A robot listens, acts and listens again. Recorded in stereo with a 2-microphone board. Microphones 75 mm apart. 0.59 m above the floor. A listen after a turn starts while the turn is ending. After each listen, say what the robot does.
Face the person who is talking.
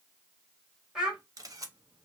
Turn 30° right.
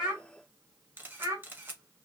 Turn 135° right.
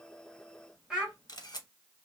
Turn 10° right.
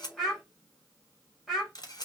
Found it: a child speaking, straight ahead.